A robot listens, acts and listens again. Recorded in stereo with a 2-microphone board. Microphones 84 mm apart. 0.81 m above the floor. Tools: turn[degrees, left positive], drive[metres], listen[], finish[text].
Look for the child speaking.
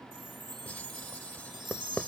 Action: listen[]
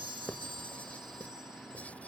Action: listen[]
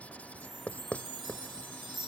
Action: finish[I can't make out a child speaking to turn to.]